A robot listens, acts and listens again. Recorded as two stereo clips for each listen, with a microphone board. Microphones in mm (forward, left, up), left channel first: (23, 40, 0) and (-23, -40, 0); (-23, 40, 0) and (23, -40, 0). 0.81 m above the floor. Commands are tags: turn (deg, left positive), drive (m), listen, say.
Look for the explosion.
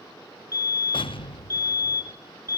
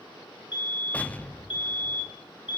<turn deg="45"/>
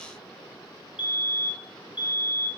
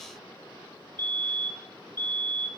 <say>I heard an explosion from this way, but can't make it out now.</say>